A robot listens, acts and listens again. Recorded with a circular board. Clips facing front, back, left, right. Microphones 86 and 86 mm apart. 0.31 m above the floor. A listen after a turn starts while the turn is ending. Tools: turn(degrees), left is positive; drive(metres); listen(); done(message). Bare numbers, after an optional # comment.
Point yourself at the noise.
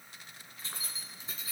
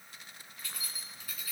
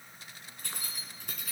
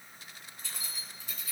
# The keys jangling: 65° left.
turn(65)
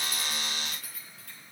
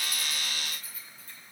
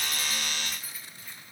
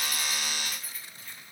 # The keys jangling is now 10° left.
turn(10)
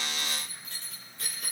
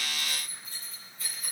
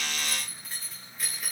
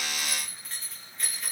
done("Facing the keys jangling, 2 to 4 m away.")